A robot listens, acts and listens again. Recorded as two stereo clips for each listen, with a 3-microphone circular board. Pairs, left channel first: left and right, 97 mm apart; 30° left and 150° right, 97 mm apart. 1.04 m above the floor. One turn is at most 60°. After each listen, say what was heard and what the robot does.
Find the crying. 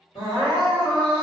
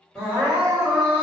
The crying: 105° left. Turn 60° left.
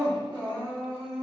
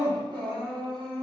The crying is now 65° left. Turn 60° left.
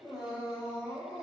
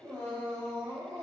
Found it: crying, straight ahead.